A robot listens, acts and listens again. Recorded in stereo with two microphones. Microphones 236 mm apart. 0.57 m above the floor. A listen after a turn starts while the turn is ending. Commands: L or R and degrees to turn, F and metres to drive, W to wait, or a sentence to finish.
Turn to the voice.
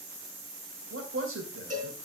R65
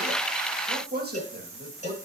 R45
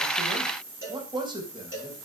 R20
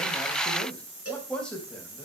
Facing the man speaking, 2 to 4 m away.